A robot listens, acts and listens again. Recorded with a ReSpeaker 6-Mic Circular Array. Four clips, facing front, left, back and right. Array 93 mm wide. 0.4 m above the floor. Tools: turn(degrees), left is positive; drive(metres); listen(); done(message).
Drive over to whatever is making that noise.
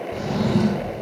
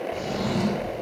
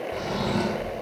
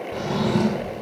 turn(degrees=-80)
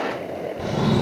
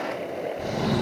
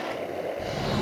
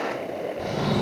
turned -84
drive(metres=1.0)
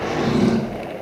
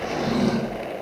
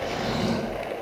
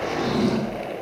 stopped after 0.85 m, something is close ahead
done("Something is in my way. I am facing the drawer but have not reached it.")